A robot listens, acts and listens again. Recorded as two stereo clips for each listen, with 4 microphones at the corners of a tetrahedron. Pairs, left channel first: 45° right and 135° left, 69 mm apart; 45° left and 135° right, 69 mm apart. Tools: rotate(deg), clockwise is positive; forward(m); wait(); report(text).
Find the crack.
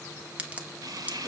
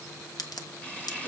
rotate(-65)
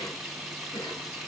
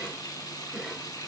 report("I heard a crack from this way, but can't make it out now.")